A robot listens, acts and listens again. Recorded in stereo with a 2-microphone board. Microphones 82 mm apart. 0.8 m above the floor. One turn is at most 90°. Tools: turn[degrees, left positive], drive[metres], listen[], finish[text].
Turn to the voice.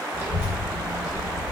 Thought: The child speaking: about 30° right or 150° right.
Action: turn[-30]
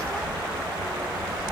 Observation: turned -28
Thought: So it is at 120° right.
Action: turn[-90]
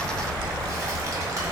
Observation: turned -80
Thought: The child speaking is now 40° right.
Action: turn[-40]
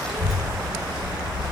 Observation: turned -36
Action: finish[Facing the child speaking, 1 to 2 m away.]